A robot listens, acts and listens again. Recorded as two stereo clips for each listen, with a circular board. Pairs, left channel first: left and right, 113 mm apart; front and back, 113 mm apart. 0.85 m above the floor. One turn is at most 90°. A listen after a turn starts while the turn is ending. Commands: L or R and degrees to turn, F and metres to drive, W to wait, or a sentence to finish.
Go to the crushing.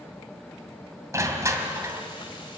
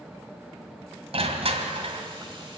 R90
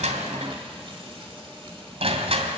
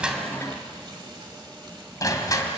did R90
R60
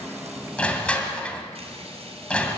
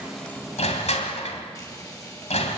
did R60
L10
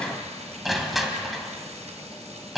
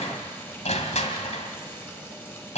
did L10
F1.0
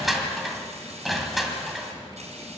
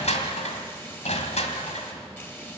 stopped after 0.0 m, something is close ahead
Something is in my way. I am facing the crushing but have not reached it.